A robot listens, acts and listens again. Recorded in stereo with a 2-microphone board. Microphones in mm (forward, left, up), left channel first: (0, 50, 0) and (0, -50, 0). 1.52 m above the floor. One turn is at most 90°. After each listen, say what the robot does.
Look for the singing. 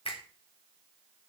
Keep listening.
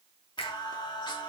Turn 50° left.
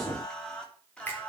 Turn 10° left.
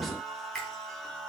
Facing the singing.